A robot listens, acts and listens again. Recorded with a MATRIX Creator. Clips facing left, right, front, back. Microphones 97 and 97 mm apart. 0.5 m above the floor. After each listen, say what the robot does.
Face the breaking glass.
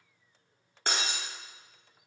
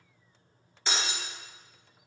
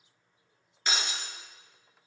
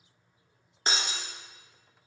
Turn 125° left.
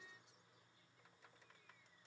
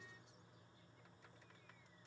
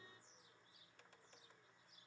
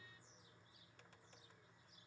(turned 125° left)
I heard breaking glass from this way, but can't make it out now.